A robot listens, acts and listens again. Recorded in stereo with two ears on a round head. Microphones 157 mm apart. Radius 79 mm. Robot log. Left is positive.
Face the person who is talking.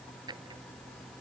cmd idle
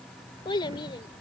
note: The child speaking: about 25° left or 155° left.
cmd yaw +25
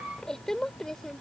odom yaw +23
end: Found it: a child speaking, straight ahead.